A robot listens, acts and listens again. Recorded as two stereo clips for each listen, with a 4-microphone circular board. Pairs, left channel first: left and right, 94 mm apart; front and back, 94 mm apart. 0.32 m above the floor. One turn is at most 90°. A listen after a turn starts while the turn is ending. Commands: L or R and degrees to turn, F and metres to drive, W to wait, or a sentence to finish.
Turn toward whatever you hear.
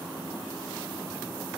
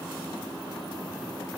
W
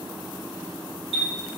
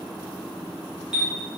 L90
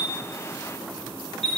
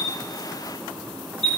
L10
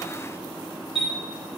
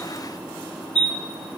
Facing the chime.